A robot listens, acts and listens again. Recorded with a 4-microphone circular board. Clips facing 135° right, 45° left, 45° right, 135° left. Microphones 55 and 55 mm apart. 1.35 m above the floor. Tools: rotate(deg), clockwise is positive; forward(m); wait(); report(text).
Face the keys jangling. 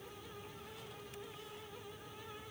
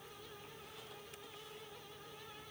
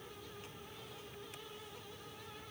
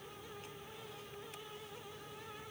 wait()
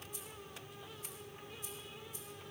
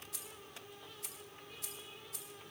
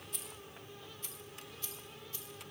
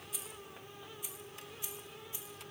rotate(-65)
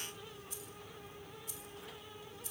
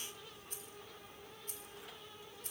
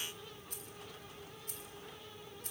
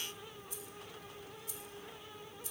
report("Facing the keys jangling.")